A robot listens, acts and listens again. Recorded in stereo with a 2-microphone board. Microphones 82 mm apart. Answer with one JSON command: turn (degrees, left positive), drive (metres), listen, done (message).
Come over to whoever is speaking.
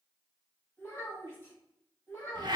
{"turn": 30}
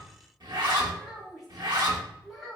{"drive": 1.0}
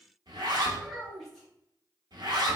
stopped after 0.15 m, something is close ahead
{"done": "Something is in my way. I am facing the child speaking but have not reached it."}